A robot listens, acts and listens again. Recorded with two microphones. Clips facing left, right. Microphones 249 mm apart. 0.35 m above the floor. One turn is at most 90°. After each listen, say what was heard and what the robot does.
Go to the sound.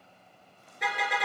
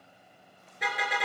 Turn 30° left.
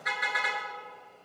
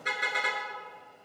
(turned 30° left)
So it is at 30° right. Turn 30° right.
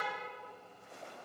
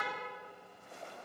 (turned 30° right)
Keep listening.
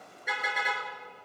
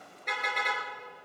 Drive 1.0 m forward.
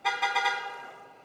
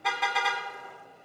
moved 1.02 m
Drive 1.0 m forward.
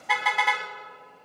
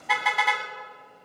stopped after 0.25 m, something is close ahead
Arrived at the car horn, straight ahead.